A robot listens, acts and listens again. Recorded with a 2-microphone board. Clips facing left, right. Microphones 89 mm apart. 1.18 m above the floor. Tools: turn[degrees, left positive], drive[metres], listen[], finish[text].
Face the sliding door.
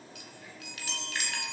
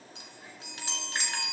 Action: listen[]
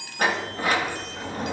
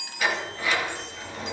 Thought: The sliding door: about 45° left or 135° left.
Action: turn[45]
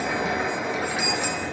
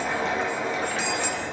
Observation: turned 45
Action: finish[Found it: a sliding door, straight ahead.]